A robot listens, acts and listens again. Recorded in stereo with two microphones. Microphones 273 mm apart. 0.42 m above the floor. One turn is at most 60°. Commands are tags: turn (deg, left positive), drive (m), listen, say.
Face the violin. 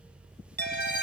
<turn deg="35"/>
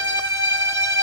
<turn deg="60"/>
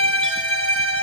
<turn deg="50"/>
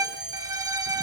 <turn deg="-10"/>
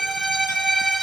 <say>Found it: a violin, straight ahead.</say>